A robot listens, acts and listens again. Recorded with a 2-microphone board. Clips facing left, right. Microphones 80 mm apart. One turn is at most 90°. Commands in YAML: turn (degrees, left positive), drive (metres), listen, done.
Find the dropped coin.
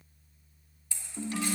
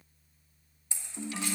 turn: -25
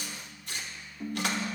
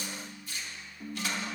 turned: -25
listen: true
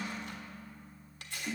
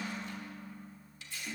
done: "I heard a dropped coin, but can't make it out now. It was about straight ahead or 130° right."